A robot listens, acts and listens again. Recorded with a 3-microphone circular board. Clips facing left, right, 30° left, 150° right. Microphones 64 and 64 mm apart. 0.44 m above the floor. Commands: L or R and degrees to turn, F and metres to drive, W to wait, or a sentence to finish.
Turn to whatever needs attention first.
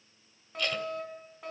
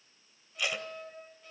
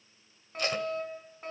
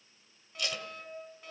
L70
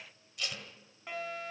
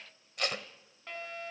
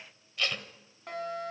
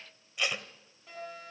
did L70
L10
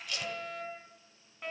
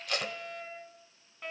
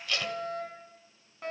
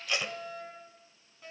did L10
Facing the fire alarm, over 4 m away.